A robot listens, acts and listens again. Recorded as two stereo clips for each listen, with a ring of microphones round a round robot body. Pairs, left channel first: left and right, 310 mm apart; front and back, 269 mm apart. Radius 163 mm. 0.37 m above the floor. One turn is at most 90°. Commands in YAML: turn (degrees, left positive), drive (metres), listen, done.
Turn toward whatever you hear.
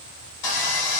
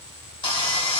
turn: 70
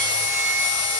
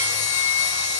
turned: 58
turn: 10
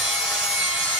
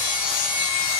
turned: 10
done: "Facing the sawing."